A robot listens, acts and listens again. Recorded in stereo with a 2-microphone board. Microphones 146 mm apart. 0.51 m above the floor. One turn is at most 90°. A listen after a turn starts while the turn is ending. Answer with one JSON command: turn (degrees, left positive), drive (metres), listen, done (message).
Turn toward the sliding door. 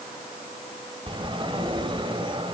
{"turn": -35}
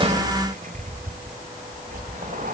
{"turn": -90}
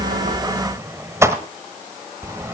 {"turn": -20}
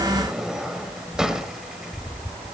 {"done": "Found it: a sliding door, straight ahead."}